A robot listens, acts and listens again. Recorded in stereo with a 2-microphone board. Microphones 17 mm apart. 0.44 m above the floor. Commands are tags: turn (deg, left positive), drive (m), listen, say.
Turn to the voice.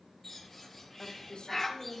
<turn deg="55"/>
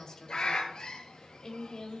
<turn deg="50"/>
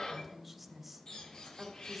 <turn deg="-10"/>
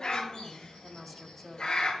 <say>Found it: a woman speaking, straight ahead.</say>